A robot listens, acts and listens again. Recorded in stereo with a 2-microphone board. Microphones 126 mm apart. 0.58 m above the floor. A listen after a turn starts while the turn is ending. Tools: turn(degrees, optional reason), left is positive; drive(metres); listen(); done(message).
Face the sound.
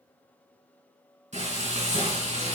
turn(degrees=-70, reason="The frying: about 70° right or 110° right.")
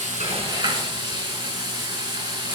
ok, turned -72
turn(degrees=-40, reason="So it is at 40° right.")
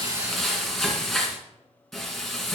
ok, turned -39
done("Found it: frying, straight ahead.")